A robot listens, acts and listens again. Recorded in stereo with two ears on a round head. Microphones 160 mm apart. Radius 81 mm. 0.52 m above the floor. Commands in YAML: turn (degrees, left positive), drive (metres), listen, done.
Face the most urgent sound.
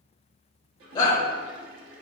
turn: 25
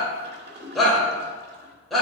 done: "Facing the shout, 1 to 2 m away."